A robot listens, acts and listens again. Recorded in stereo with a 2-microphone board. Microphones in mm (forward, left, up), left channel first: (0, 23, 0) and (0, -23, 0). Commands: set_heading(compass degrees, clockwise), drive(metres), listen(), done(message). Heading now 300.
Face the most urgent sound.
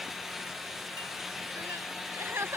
set_heading(0)
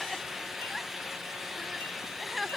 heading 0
done("Found it: crying, straight ahead.")